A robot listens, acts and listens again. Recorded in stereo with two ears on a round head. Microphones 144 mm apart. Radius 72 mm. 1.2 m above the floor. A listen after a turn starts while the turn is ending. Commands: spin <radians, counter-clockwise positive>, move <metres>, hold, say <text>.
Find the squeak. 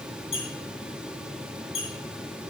spin 0.61
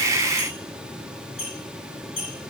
say Found it: a squeak, straight ahead, over 4 m away.